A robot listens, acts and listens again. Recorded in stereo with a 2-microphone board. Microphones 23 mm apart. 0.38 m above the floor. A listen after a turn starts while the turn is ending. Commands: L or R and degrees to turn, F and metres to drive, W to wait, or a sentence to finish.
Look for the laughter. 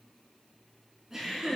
R20
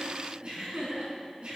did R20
R130
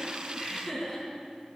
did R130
L20
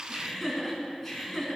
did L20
L10
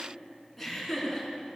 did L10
Found it: laughter, straight ahead, over 4 m away.